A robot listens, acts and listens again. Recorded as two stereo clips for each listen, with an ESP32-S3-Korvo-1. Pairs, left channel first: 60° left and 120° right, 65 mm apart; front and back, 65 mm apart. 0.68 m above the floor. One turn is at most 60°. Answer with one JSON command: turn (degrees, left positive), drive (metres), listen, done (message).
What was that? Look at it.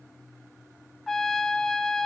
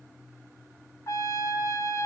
{"turn": -30}
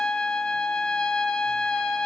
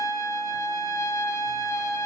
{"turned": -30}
{"turn": -10}
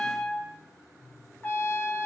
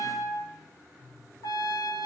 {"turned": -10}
{"done": "Facing the trumpet, 2 to 4 m away."}